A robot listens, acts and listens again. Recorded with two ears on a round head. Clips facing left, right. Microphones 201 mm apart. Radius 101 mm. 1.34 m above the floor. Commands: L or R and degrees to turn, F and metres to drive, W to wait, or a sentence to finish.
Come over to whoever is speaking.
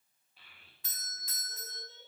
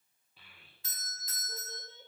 R90
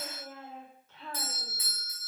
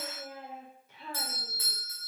R10
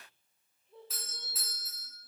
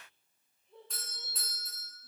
F1.0
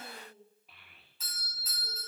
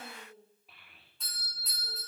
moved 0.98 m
F1.0
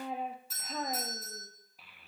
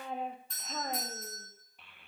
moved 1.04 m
F1.0
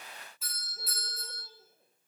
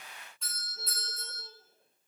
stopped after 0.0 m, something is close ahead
W
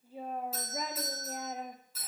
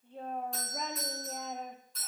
Arrived at the child speaking, straight ahead.